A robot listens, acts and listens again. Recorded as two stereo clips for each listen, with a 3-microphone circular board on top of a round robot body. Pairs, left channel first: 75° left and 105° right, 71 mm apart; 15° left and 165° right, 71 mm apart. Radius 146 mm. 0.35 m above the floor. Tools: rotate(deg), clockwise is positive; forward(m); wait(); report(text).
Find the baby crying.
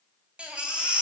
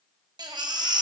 rotate(-180)
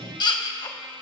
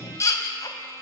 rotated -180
rotate(-60)
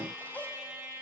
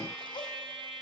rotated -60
wait()
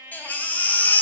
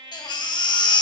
report("Facing the baby crying.")